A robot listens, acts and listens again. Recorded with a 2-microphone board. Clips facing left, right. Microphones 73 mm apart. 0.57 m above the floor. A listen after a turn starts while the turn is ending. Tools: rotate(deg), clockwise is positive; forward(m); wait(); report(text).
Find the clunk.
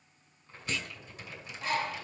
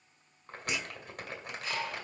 rotate(30)
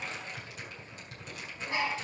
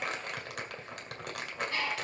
wait()
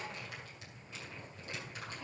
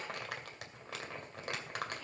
report("I heard a clunk, but can't make it out now. It was about 15° left or 135° right.")